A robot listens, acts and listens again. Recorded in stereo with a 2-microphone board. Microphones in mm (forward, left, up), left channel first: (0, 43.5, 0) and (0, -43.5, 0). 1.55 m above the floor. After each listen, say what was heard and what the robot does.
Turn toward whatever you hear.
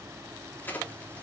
The crack: about 20° left or 160° left. Turn 20° left.
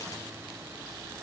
Keep listening.
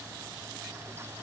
I heard a crack, but can't make it out now. It was about straight ahead or 140° left.